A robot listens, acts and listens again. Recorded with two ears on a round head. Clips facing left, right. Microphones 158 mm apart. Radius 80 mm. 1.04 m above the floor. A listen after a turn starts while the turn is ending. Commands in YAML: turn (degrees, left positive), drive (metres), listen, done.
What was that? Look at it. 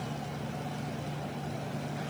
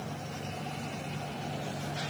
listen: true
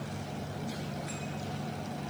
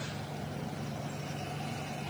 listen: true
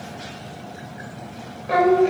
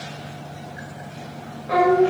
turn: 25
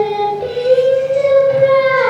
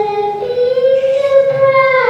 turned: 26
done: "Found it: singing, straight ahead, 2 to 4 m away."